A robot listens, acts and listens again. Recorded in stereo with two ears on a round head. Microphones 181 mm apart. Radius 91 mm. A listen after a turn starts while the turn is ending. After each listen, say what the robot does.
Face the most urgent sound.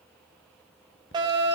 Turn 20° right.
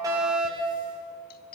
Facing the fire alarm, over 4 m away.